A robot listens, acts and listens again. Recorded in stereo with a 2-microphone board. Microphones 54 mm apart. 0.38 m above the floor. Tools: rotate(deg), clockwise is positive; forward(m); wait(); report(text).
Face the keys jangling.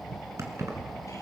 rotate(75)
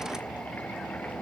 wait()
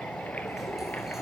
wait()
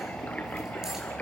report("I heard keys jangling, but can't make it out now. It was about straight ahead or 30° right.")